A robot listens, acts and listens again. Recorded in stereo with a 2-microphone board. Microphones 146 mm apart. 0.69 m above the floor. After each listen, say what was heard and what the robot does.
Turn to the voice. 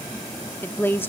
The woman speaking: about 15° left or 165° left. Turn 15° left.
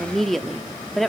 Found it: a woman speaking, straight ahead.